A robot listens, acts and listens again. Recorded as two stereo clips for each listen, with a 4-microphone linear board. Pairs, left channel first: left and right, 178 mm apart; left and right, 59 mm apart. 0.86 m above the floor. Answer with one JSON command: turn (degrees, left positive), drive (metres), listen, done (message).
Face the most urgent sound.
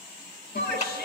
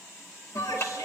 {"turn": 90}
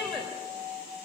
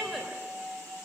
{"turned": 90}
{"done": "Found it: a shout, straight ahead, 2 to 4 m away."}